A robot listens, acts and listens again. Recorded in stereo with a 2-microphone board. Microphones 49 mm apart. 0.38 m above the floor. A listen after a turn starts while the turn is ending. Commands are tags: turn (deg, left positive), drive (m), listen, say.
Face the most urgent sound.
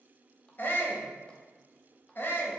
<turn deg="45"/>
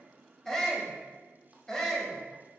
<turn deg="10"/>
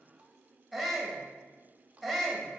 <say>Facing the shout.</say>